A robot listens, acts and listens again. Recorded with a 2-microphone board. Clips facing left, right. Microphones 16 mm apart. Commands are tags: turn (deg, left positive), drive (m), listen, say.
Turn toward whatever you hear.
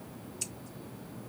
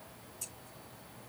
<turn deg="45"/>
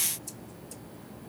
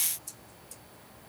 <listen/>
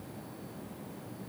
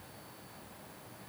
<listen/>
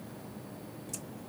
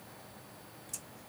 <say>I heard scissors, but can't make it out now. It was about straight ahead or 90° left.</say>